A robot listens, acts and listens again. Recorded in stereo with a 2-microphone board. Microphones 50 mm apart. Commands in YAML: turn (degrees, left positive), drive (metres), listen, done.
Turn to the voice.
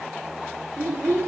turn: -65
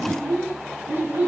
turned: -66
turn: -55
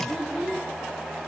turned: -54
done: "Found it: a child speaking, straight ahead, 2 to 4 m away."